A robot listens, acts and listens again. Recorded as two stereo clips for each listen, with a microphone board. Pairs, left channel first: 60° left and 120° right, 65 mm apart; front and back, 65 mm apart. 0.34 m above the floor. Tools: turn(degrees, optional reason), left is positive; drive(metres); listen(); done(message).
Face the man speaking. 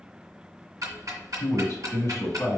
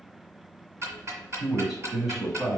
turn(degrees=95, reason="The man speaking: 95° left.")
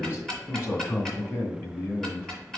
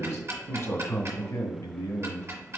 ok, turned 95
turn(degrees=20, reason="The man speaking is now 20° left.")
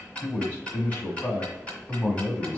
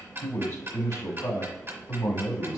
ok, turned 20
done("Facing the man speaking, 1 to 2 m away.")